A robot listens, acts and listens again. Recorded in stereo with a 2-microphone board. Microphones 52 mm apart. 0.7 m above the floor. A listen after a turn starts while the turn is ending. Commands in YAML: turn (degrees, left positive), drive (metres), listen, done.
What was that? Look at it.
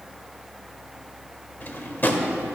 turn: 40
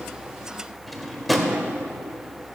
done: "Found it: a drawer, straight ahead."